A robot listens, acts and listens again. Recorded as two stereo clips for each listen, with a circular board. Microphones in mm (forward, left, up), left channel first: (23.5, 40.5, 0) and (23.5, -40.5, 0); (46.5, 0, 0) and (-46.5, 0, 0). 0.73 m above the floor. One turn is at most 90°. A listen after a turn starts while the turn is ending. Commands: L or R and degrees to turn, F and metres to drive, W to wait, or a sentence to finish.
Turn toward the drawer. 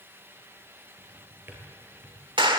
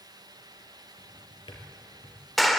R25
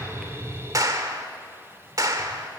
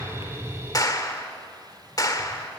W
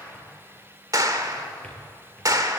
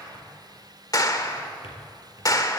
W
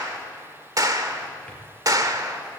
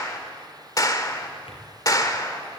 Facing where the drawer came from. I can't hear it now.